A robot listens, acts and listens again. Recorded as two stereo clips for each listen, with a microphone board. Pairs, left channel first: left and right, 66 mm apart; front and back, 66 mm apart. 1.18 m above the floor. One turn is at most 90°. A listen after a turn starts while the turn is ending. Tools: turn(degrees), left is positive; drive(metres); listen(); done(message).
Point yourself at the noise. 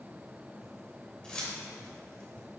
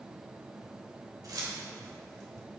turn(degrees=90)
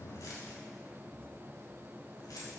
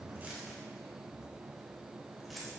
turn(degrees=75)
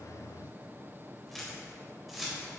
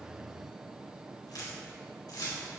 done("Found it: keys jangling, straight ahead, over 4 m away.")